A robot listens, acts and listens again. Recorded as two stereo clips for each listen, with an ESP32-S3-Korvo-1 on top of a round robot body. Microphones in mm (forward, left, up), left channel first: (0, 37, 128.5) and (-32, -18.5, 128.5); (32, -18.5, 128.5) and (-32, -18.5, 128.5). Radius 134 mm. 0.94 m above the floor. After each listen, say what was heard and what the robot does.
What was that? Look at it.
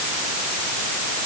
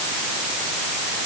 Keep listening.
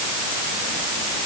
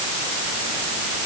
Keep listening.
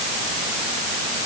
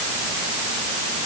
I can't make out anything to turn to.